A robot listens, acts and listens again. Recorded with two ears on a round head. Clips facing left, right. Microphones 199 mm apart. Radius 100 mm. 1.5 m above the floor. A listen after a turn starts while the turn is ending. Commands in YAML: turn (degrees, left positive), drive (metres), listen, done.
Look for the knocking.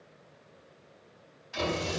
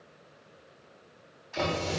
turn: -55
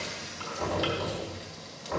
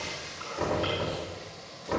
turn: -65
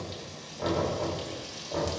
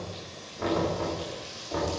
turn: -25
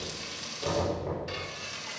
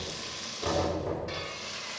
done: "Found it: knocking, straight ahead."